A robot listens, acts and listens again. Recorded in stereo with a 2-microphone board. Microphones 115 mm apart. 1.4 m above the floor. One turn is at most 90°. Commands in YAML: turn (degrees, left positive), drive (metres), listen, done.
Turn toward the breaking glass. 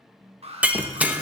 turn: -30
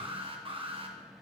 listen: true
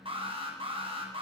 done: "I heard breaking glass, but can't make it out now. It was about 20° left or 140° right."